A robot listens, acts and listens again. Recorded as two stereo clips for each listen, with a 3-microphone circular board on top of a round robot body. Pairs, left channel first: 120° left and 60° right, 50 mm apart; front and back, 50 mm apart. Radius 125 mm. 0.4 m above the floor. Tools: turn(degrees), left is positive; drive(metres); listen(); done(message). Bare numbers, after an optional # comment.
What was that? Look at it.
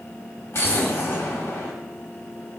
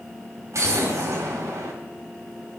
# The explosion: 150° left.
turn(150)
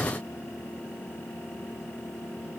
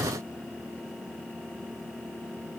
done("Facing where the explosion came from. I can't hear it now.")